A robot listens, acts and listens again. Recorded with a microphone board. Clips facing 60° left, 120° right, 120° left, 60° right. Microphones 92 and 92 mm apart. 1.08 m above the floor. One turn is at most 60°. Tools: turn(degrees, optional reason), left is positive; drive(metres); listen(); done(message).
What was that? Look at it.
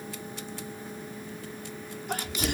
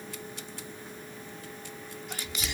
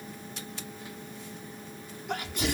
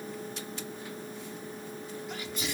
turn(degrees=60, reason="The sneeze: 95° left.")
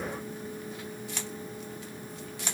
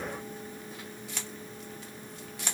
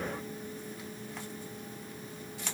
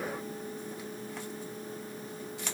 turn(degrees=35, reason="Nothing new. It was at 35° left.")
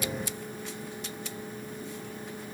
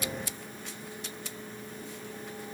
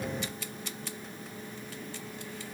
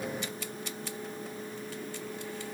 done("Facing where the sneeze came from. I can't hear it now.")